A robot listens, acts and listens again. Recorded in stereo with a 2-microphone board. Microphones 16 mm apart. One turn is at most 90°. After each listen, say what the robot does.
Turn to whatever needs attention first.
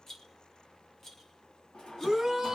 Turn 30° right.
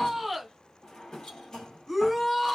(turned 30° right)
Facing the shout, 1 to 2 m away.